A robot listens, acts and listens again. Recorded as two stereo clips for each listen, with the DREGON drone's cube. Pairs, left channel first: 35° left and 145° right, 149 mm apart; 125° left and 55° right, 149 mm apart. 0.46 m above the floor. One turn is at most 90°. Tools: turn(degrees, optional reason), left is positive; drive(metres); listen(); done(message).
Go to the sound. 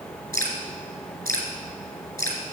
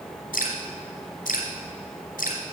turn(degrees=90, reason="The dripping: 105° left.")
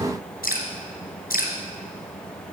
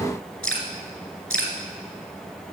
turn(degrees=40, reason="The dripping is now 40° left.")
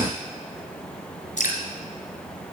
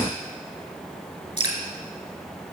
drive(metres=1.0)
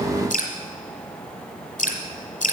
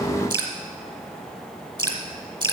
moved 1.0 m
drive(metres=1.0)
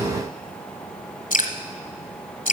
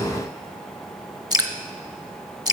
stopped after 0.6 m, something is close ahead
done("Arrived at the dripping, straight ahead.")